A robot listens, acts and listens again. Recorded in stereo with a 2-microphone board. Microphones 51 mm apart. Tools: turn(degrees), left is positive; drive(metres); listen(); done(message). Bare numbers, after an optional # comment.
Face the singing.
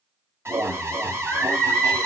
turn(30)
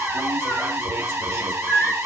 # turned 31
# So it is at 130° left.
turn(130)
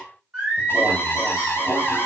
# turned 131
# The singing is now 15° right.
turn(-15)
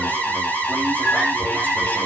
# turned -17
listen()
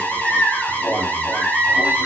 done("Facing the singing, 2 to 4 m away.")